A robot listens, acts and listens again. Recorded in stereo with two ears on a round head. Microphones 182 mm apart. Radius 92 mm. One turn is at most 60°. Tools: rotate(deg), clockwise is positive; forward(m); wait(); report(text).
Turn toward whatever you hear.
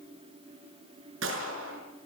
rotate(60)
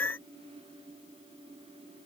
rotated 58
wait()
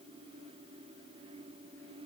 report("I heard a gunshot, but can't make it out now. It was about 5° right or 60° right.")